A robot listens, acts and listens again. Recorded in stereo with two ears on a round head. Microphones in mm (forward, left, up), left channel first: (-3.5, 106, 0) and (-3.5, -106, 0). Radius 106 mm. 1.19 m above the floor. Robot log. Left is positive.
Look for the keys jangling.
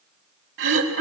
cmd idle
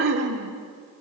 cmd idle
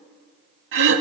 end: I can't make out keys jangling, only throat clearing.